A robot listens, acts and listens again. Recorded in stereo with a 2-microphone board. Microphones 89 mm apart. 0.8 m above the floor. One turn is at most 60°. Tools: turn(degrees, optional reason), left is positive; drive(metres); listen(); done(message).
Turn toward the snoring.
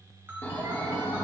turn(degrees=25, reason="The snoring: about 25° left or 155° left.")
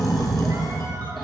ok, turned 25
done("Facing the snoring, 1 to 2 m away.")